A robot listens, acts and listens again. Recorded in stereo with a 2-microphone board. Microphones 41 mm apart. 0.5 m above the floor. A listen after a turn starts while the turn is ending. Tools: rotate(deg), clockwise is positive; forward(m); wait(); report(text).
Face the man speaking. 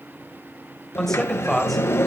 rotate(-30)
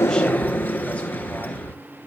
rotate(-155)
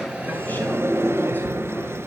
wait()
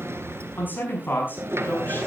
rotate(-45)
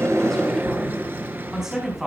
rotate(10)
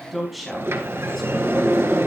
report("Facing the man speaking, over 4 m away.")